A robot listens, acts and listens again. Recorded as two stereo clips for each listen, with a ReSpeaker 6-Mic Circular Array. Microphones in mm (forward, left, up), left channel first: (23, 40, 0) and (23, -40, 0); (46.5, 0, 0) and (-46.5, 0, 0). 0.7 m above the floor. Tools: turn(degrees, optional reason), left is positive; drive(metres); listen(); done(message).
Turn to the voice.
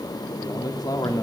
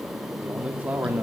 turn(degrees=115, reason="The man speaking: 115° left.")
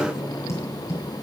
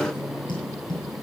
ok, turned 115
listen()
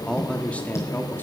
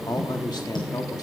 turn(degrees=30, reason="The man speaking is now 30° left.")
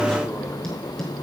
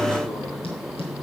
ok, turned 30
listen()
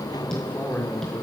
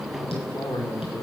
turn(degrees=30, reason="The man speaking is now 30° left.")
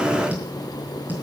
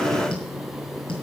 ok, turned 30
listen()
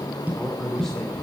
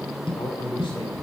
done("Facing the man speaking, 2 to 4 m away.")